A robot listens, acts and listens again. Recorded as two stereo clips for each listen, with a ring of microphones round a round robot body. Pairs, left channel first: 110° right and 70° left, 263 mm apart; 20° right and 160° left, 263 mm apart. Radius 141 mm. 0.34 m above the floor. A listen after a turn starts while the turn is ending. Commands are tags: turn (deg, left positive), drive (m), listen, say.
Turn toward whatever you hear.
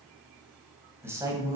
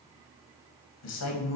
<turn deg="-10"/>
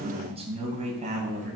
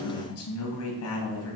<say>Found it: a man speaking, straight ahead.</say>